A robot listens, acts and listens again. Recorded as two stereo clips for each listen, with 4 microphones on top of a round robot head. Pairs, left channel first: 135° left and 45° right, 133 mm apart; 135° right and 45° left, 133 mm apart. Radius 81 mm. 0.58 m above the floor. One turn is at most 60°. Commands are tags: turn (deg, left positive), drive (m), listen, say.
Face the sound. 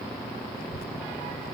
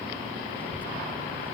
<turn deg="60"/>
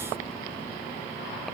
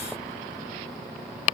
<turn deg="60"/>
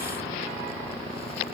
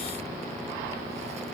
<turn deg="25"/>
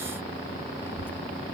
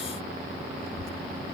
<turn deg="60"/>
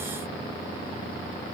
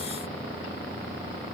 <listen/>
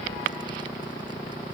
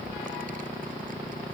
<turn deg="15"/>
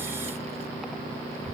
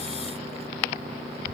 <say>Facing the child speaking.</say>